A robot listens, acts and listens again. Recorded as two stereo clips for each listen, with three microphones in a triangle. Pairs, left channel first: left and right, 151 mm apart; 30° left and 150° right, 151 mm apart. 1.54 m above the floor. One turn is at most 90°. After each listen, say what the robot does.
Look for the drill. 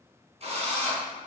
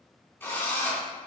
Turn 45° right.
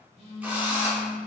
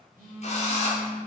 Turn 10° right.
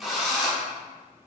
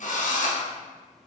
Found it: a drill, straight ahead, 1 to 2 m away.